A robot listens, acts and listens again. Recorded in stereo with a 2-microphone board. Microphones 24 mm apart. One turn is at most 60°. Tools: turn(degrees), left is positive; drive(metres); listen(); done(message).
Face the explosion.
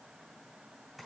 listen()
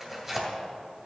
listen()
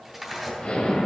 turn(degrees=50)
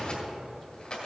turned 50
listen()
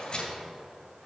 done("I heard an explosion, but can't make it out now. It was about straight ahead or 80° left.")